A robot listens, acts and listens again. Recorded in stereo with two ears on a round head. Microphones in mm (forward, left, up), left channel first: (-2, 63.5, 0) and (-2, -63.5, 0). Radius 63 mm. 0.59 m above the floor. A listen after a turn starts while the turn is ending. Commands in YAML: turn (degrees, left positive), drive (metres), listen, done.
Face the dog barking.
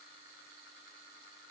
listen: true
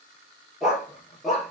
turn: 30
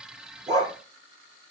turn: -25
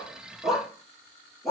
done: "Found it: a dog barking, straight ahead, over 4 m away."